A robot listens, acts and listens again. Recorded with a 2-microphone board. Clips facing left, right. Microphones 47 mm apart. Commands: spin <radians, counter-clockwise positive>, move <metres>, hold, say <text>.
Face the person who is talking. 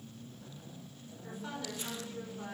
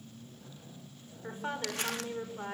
spin -0.61
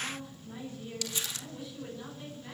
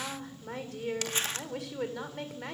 spin -1.92
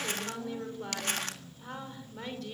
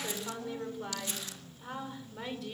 say Found it: a woman speaking, straight ahead.